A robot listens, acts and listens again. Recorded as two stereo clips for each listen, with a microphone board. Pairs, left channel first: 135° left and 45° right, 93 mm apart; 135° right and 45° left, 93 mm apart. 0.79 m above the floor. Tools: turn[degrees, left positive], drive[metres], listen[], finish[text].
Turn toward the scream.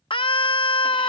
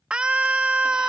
Thought: The scream: 125° left.
Action: turn[125]
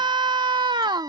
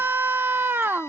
Thought: The scream is now 20° right.
Action: turn[-20]
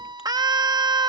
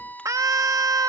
Action: finish[Facing the scream.]